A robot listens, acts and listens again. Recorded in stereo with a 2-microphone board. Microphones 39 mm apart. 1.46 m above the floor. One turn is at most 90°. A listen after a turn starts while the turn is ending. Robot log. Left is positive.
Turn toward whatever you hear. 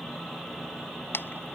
note: The chewing: about 70° left or 110° left.
cmd yaw +70
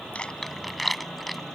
end: Found it: chewing, straight ahead.